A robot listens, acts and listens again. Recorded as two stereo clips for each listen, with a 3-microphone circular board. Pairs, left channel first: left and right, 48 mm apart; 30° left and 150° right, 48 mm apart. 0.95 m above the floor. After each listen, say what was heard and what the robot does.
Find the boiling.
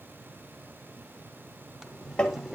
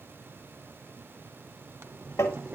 The boiling: 170° right. Turn 170° right.
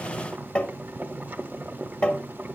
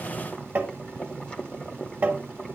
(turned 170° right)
The boiling is now 40° right. Turn 40° right.
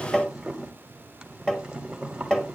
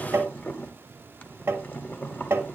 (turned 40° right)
The boiling is now 15° right. Turn 15° right.
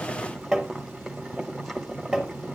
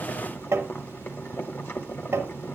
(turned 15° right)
Found it: boiling, straight ahead.